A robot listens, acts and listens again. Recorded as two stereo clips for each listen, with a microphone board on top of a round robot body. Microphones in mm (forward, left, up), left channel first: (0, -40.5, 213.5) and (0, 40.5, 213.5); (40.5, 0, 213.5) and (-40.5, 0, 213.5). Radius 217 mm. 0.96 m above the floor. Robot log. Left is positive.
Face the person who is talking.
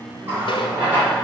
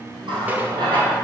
cmd idle
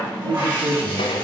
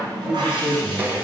note: The man speaking: 105° left.
cmd yaw +105
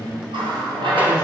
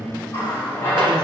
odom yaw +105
note: The man speaking is now 20° left.
cmd yaw +20
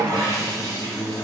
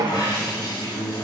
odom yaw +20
end: Facing the man speaking, 2 to 4 m away.